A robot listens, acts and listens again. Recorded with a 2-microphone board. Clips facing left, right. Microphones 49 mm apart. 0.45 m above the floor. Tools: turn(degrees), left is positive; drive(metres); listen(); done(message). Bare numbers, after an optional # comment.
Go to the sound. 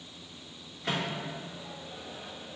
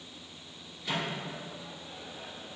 # The microwave: about 65° left or 115° left.
turn(65)
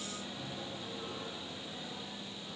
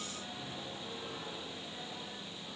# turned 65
# So it is at 25° left.
turn(25)
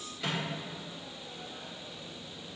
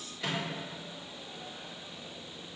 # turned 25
drive(1.0)
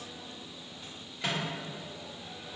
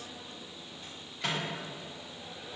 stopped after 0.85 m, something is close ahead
done("Arrived at the microwave, straight ahead.")